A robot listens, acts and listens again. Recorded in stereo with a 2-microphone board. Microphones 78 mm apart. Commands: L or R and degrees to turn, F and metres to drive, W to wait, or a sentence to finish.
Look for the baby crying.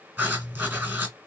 W
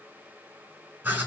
W
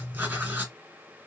I can't make out a baby crying, only writing.